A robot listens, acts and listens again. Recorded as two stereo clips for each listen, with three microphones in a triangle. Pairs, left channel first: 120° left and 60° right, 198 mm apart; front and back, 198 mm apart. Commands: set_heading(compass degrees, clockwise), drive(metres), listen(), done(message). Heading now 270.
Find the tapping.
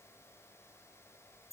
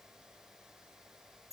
listen()
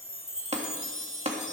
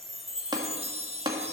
set_heading(25)
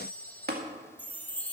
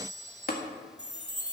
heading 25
set_heading(60)
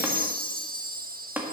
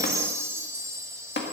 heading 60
set_heading(40)
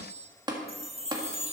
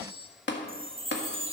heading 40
done("Found it: tapping, straight ahead, 1 to 2 m away.")